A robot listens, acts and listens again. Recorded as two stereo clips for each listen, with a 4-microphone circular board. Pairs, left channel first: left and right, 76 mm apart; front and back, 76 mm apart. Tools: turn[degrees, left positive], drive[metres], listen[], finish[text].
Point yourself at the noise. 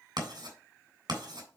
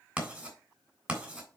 Thought: The writing: 110° right.
Action: turn[-110]
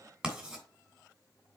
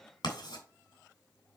Thought: The writing is now 15° right.
Action: turn[-15]
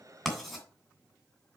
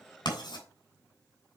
Action: finish[Found it: writing, straight ahead.]